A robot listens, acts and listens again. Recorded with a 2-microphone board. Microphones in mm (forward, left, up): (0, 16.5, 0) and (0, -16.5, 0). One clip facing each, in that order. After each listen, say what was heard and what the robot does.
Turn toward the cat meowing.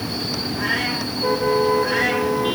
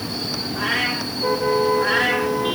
The cat meowing: about 60° right or 120° right. Turn 60° right.
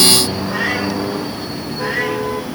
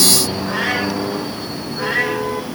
So it is at 65° right. Turn 65° right.
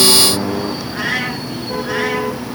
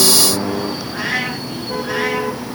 The cat meowing is now 10° right. Turn 10° right.
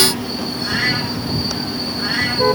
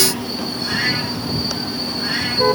Found it: a cat meowing, straight ahead, over 4 m away.